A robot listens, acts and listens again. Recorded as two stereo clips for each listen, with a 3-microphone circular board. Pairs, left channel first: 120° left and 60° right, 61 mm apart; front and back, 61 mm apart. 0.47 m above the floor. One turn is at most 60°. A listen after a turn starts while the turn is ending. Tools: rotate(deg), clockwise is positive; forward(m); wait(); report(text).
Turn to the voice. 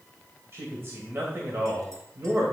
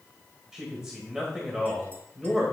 rotate(60)
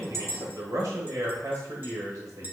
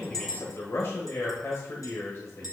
rotate(40)
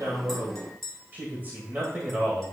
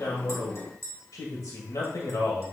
report("Facing the man speaking.")